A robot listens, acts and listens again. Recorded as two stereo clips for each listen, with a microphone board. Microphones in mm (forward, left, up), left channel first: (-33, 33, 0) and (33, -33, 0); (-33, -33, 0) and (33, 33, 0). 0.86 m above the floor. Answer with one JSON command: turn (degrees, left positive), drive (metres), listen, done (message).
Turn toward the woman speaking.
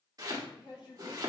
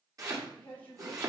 {"turn": 155}
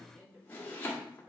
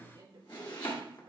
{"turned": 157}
{"turn": 15}
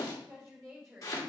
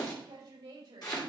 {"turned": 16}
{"turn": 15}
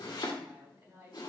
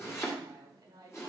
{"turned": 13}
{"done": "Found it: a woman speaking, straight ahead, 2 to 4 m away."}